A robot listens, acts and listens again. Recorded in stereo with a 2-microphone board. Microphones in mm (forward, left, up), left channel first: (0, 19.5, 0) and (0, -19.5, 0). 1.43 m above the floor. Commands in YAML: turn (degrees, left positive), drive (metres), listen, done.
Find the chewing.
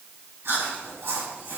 turn: -70
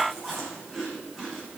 done: "Facing the chewing."